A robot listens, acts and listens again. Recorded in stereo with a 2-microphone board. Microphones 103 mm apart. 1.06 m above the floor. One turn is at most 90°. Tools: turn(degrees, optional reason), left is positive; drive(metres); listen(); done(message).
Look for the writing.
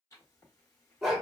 turn(degrees=30, reason="The writing: about 30° left or 150° left.")
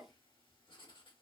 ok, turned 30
turn(degrees=90, reason="So it is at 115° left.")
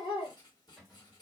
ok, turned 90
turn(degrees=45, reason="The writing is now 45° left.")
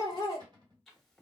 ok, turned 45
done("Found it: writing, straight ahead, 1 to 2 m away.")